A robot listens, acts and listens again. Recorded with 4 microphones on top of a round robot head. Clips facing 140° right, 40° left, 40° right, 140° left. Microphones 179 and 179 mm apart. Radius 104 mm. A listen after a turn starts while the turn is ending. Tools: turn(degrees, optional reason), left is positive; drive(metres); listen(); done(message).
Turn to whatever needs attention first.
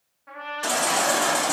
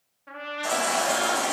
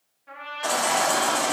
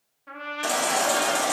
turn(degrees=-165, reason="The baby crying: 165° right.")
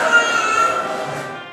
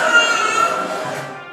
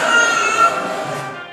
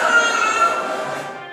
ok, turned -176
turn(degrees=15, reason="The baby crying is now 15° left.")
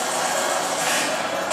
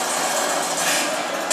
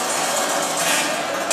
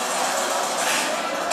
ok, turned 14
done("Facing the baby crying.")